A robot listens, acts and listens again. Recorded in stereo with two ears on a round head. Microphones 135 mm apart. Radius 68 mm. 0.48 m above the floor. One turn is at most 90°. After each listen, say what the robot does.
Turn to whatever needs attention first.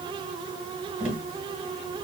Keep listening.
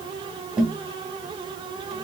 Keep listening.
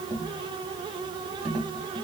I can't make out anything urgent to turn to.